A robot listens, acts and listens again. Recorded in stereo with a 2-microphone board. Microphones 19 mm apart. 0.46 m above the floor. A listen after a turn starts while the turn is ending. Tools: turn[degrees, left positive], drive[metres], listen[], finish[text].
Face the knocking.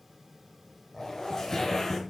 Thought: The knocking: about 45° right or 135° right.
Action: turn[-45]
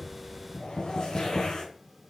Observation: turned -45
Action: finish[Found it: knocking, straight ahead, 2 to 4 m away.]